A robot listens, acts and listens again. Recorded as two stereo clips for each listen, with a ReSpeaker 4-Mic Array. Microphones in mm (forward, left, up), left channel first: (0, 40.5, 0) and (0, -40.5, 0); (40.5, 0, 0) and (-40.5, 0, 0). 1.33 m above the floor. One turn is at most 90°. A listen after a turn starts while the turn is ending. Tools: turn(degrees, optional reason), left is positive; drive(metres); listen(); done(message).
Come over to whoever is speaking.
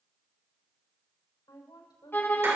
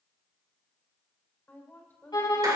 turn(degrees=65, reason="The woman speaking: 65° left.")
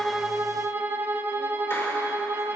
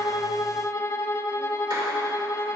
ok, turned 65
listen()
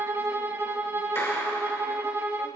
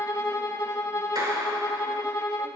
listen()
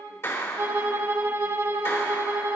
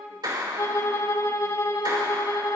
done("Facing where the woman speaking came from. I can't hear it now. I did not reach it.")